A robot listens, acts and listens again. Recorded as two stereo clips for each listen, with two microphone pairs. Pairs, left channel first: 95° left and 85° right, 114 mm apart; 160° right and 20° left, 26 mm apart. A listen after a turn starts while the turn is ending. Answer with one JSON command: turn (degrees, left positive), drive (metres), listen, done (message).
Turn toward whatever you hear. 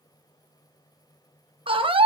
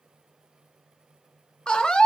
{"turn": -110}
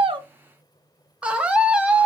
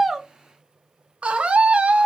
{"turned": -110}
{"done": "Facing the scream, under 1 m away."}